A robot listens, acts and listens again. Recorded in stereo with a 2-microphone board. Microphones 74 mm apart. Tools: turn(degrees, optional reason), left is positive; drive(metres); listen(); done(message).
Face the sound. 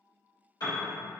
turn(degrees=60, reason="The piano: about 60° left or 120° left.")
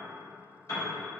turn(degrees=55, reason="So it is at 55° left.")
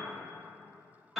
done("Facing the piano.")